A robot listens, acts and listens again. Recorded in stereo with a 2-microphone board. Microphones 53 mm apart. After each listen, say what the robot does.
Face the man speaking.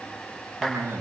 Turn 70° right.
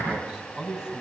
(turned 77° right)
Turn 10° right.
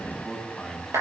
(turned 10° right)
Facing the man speaking, 2 to 4 m away.